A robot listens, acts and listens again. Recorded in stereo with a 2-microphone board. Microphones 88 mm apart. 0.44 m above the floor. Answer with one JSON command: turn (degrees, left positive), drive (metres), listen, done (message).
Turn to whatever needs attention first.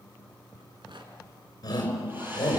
{"turn": 50}
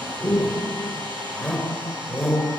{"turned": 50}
{"done": "Found it: a shout, straight ahead."}